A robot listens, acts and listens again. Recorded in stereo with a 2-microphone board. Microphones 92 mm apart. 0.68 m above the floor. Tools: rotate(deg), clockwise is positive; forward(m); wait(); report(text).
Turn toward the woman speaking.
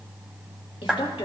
rotate(-70)
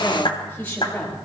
rotate(-20)
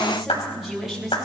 report("Facing the woman speaking.")